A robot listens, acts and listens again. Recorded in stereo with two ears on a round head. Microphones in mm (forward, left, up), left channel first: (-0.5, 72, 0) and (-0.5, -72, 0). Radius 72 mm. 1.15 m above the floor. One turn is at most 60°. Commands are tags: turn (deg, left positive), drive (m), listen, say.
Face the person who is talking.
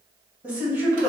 <turn deg="-30"/>
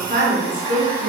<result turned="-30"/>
<turn deg="-60"/>
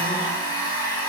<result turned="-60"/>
<turn deg="-60"/>
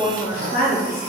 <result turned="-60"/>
<turn deg="50"/>
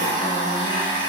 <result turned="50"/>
<listen/>
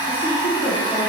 <turn deg="20"/>
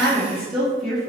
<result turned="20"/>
<say>Found it: a woman speaking, straight ahead.</say>